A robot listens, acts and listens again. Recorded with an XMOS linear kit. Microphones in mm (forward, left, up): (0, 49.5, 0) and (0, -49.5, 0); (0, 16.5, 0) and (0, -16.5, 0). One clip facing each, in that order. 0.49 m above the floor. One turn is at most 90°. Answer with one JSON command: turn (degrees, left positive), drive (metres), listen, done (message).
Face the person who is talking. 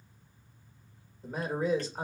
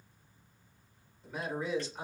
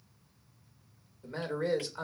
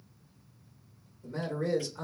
{"turn": 45}
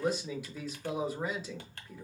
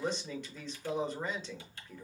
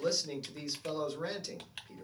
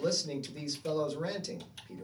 {"turn": 10}
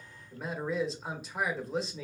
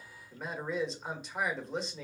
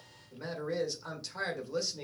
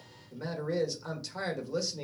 {"done": "Found it: a man speaking, straight ahead."}